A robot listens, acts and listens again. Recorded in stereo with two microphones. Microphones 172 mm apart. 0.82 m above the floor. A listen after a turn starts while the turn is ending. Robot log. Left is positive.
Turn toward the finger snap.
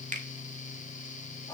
note: The finger snap: about 50° right or 130° right.
cmd yaw -50
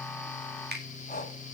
note: So it is at 80° right.
cmd yaw -80
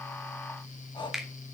end: Found it: a finger snap, straight ahead, 2 to 4 m away.